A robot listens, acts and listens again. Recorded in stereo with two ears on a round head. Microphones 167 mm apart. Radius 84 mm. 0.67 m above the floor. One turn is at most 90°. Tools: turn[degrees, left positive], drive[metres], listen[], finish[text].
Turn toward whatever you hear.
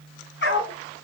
Thought: The dog barking: about 65° left or 115° left.
Action: turn[65]
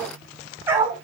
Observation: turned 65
Thought: So it is at 15° right.
Action: turn[-15]
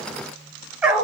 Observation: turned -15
Action: finish[Found it: a dog barking, straight ahead.]